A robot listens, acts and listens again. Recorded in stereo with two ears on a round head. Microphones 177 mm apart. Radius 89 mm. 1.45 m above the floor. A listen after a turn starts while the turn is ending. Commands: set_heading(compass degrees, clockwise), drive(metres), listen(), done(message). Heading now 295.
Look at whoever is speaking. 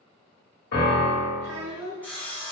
set_heading(0)
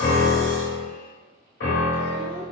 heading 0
listen()
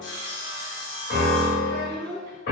set_heading(45)
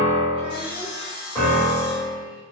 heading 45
listen()
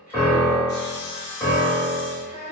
done("Found it: a child speaking, straight ahead.")